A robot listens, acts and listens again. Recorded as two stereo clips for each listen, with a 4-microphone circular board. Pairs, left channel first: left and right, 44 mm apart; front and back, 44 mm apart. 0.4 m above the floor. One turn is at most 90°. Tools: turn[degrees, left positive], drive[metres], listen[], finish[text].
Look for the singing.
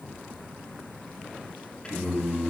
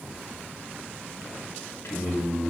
Thought: The singing: 25° left.
Action: turn[25]
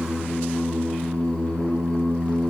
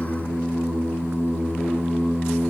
Thought: The singing is now 20° left.
Action: turn[20]
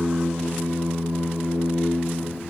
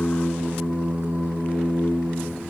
Thought: The singing is now 10° left.
Action: turn[10]
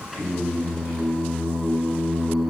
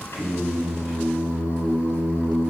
Action: finish[Found it: singing, straight ahead.]